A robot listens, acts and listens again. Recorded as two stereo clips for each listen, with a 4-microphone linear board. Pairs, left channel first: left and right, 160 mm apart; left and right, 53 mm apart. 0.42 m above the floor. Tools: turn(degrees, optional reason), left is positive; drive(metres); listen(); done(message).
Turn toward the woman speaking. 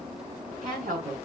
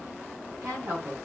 turn(degrees=-55, reason="The woman speaking: about 55° right or 125° right.")
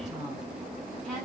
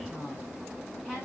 done("Found it: a woman speaking, straight ahead.")